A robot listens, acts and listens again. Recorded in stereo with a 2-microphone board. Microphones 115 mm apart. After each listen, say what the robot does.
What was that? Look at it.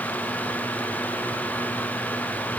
Keep listening.
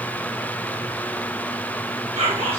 Turn 60° right.
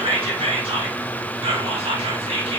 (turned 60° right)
Turn 60° right.
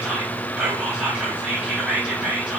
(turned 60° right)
Turn 10° right.
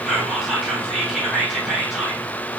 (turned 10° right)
Facing the whispering.